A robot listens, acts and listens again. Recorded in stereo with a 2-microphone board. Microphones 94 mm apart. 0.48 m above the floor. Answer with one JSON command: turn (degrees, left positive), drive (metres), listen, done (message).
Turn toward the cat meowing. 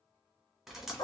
{"listen": true}
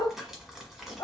{"listen": true}
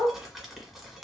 {"done": "I can't make out a cat meowing, only dripping and a dog barking."}